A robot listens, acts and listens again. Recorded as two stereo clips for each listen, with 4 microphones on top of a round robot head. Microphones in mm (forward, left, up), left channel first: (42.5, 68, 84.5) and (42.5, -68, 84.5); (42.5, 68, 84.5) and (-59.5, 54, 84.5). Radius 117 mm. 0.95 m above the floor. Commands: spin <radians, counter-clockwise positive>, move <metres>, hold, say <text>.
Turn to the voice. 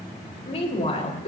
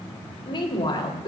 spin 0.79
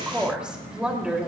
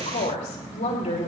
say Facing the woman speaking.